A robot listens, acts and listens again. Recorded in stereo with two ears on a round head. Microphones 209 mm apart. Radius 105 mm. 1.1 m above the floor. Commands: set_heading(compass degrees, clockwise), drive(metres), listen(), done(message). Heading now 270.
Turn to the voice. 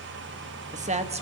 set_heading(300)
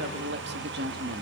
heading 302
set_heading(77)
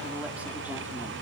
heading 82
listen()
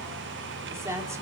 set_heading(92)
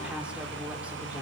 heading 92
listen()
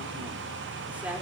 listen()
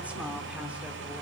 done("Facing where the woman speaking came from. I can't hear it now.")